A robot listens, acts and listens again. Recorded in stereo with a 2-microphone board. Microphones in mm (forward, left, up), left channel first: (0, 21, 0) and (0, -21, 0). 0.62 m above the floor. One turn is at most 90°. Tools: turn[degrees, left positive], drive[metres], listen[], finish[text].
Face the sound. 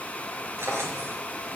Action: turn[-90]
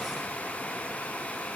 Action: listen[]
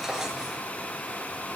Thought: The drawer is now 10° right.
Action: turn[-10]
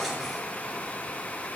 Action: finish[Facing the drawer, 2 to 4 m away.]